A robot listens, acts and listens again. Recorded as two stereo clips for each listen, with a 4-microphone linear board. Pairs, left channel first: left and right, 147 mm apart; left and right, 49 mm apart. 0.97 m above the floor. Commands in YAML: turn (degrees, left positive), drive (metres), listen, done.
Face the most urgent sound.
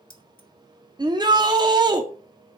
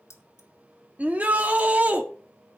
turn: -30
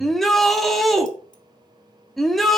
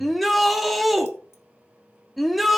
done: "Facing the shout, 1 to 2 m away."